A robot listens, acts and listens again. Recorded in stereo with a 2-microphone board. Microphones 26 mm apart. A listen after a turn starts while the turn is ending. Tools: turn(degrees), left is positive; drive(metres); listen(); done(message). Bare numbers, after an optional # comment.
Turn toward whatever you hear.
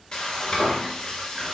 # The frying: about 30° left or 150° left.
turn(30)
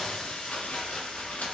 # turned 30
# So it is at 120° left.
turn(120)
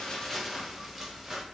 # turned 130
# The frying is now 10° right.
turn(-10)
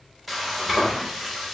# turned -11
done("Found it: frying, straight ahead, under 1 m away.")